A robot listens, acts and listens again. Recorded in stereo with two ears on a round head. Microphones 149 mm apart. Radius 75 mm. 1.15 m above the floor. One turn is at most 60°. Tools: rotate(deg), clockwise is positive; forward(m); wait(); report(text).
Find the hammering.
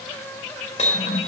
rotate(-45)
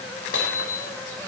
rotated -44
rotate(-60)
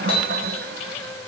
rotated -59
rotate(-35)
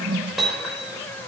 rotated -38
report("Facing the hammering.")